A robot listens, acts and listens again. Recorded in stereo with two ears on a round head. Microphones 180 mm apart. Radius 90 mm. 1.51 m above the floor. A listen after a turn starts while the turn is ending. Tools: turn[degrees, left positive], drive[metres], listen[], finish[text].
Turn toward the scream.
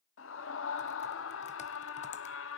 Thought: The scream: about 75° left or 105° left.
Action: turn[75]
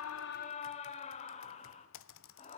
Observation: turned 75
Thought: So it is at 35° left.
Action: turn[35]
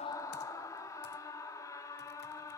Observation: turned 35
Thought: The scream is now 15° left.
Action: turn[15]
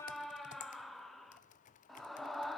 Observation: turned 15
Action: finish[Facing the scream, 2 to 4 m away.]